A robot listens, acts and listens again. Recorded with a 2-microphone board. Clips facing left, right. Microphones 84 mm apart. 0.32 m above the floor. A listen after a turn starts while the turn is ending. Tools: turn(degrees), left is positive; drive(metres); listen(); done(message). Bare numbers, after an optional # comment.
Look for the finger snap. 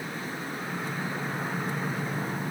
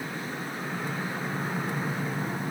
listen()
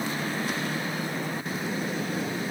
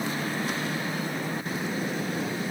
listen()
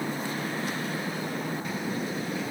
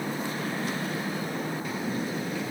done("I can't make out a finger snap.")